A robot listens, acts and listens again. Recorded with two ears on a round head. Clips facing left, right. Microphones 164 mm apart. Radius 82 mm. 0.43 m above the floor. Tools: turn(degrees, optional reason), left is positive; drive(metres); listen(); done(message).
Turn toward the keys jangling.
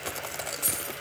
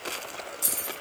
turn(degrees=-50, reason="The keys jangling: about 50° right or 130° right.")
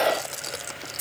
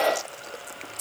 done("Found it: keys jangling, straight ahead.")